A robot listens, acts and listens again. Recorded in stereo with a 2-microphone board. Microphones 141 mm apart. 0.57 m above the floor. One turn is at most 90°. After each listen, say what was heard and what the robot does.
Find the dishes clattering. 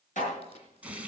The dishes clattering: about 65° left or 115° left. Turn 65° left.
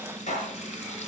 So it is at 55° left. Turn 55° left.
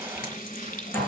Keep listening.
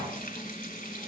Keep listening.
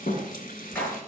The dishes clattering is now 15° left. Turn 15° left.
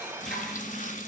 Keep listening.
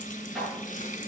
Facing the dishes clattering.